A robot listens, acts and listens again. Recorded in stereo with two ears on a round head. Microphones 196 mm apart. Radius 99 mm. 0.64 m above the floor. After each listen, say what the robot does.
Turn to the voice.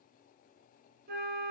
Keep listening.
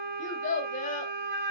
Turn 35° left.
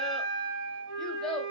Found it: a child speaking, straight ahead, 1 to 2 m away.